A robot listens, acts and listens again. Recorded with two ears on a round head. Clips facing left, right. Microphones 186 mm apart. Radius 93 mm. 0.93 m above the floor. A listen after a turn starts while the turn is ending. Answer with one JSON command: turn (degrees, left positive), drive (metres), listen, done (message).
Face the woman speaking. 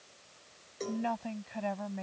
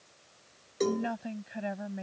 {"turn": -30}
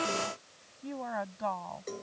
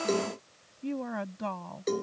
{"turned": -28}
{"turn": -140}
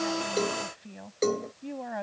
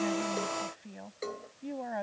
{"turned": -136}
{"done": "Facing the woman speaking."}